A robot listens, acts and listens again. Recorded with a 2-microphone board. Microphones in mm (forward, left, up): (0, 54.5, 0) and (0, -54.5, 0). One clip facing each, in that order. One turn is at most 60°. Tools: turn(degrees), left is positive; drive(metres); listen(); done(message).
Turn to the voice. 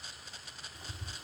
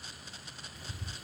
listen()
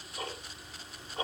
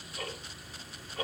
listen()
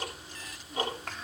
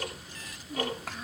turn(degrees=-30)
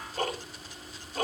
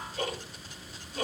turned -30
listen()
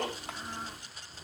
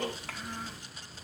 turn(degrees=25)
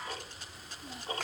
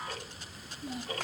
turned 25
done("Facing the child speaking.")